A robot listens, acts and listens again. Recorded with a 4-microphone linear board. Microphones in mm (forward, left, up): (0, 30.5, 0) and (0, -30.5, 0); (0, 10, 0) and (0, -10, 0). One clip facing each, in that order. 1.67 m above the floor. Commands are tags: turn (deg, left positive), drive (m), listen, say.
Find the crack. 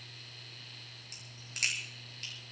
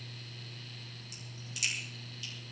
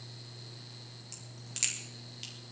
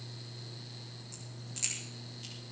<turn deg="55"/>
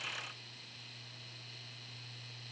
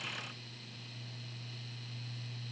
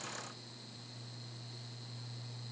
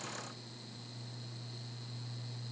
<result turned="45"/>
<listen/>
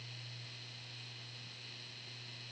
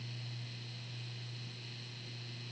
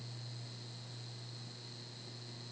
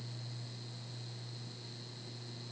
<say>I heard a crack, but can't make it out now. It was about 10° left or 80° left.</say>